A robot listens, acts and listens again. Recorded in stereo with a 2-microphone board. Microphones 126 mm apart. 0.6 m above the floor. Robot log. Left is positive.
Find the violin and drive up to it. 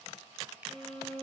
note: The violin: about 40° right or 140° right.
cmd yaw -40
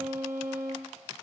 note: So it is at 105° right.
cmd yaw -105
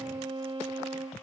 note: The violin is now 25° right.
cmd yaw -25
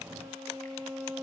cmd fwd 1.0
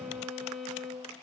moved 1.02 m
cmd fwd 1.0
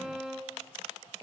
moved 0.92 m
cmd fwd 1.0
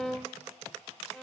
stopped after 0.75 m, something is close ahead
end: I am next to the violin.